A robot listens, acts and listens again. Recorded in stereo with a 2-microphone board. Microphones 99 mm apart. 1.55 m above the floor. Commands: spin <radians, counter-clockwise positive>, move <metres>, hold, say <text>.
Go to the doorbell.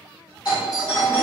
spin 0.96
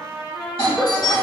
spin 1.22
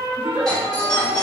move 1.0
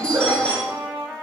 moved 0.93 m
spin 0.17
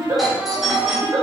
move 1.0
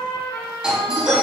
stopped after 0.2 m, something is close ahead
spin -0.17
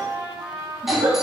say I am next to the doorbell.